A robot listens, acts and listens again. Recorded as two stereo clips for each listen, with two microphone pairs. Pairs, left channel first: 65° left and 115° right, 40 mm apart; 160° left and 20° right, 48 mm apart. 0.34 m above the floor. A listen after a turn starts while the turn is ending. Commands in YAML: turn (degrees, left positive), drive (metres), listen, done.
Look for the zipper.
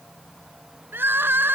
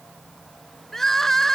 listen: true
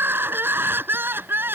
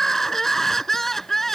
listen: true
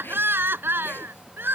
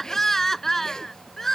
turn: 85
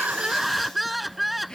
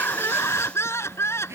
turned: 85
listen: true
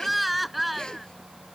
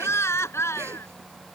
listen: true
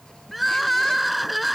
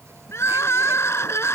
done: "I heard a zipper from this way, but can't make it out now."